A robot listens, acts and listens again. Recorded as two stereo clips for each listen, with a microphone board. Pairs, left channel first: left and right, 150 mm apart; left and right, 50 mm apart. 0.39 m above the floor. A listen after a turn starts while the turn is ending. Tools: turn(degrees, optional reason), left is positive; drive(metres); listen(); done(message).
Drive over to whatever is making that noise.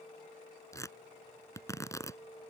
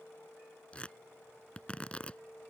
turn(degrees=20, reason="The tearing paper: about 20° left or 160° left.")
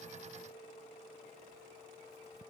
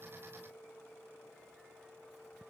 listen()
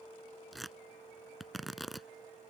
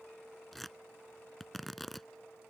drive(metres=1.0)
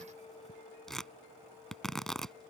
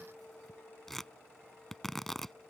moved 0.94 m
drive(metres=1.0)
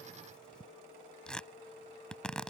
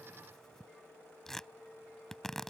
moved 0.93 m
drive(metres=1.0)
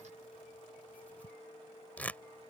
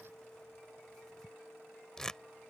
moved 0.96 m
turn(degrees=15, reason="The tearing paper is now 15° left.")
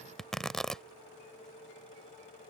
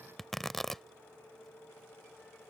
drive(metres=1.0)
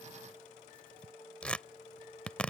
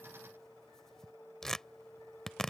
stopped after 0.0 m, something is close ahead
turn(degrees=10, reason="The tearing paper is now 10° left.")
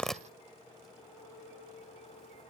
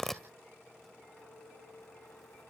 done("Arrived at the tearing paper, straight ahead.")